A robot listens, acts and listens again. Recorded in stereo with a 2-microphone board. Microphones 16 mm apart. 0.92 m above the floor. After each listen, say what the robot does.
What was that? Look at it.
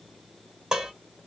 Turn 45° right.
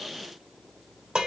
Turn 90° right.
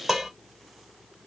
Turn 20° right.
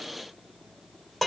Facing the dishes clattering.